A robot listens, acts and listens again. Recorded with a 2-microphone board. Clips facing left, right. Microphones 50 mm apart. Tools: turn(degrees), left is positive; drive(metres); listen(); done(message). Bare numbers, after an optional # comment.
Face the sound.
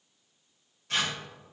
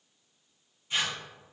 turn(90)
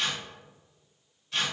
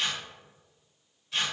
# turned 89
done("Found it: tearing paper, straight ahead, 1 to 2 m away.")